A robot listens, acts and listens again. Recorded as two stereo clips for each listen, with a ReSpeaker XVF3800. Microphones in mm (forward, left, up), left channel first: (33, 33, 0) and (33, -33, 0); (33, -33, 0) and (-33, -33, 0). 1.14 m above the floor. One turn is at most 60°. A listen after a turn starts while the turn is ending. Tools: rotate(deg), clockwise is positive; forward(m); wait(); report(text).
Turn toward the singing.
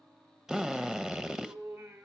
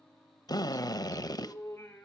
rotate(60)
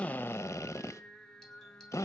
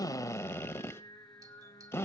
report("Found it: singing, straight ahead, 2 to 4 m away.")